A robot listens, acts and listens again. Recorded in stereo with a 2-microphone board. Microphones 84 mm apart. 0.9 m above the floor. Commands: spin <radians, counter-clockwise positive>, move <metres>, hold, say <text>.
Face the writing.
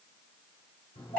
hold
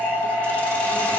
hold
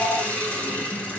say I can't make out writing, only a phone ringing and a hiss.